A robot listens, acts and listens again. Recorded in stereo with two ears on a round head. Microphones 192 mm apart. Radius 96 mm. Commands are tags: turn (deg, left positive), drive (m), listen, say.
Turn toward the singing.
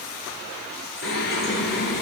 <turn deg="55"/>
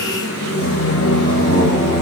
<turn deg="55"/>
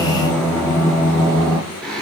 <say>Found it: singing, straight ahead, over 4 m away.</say>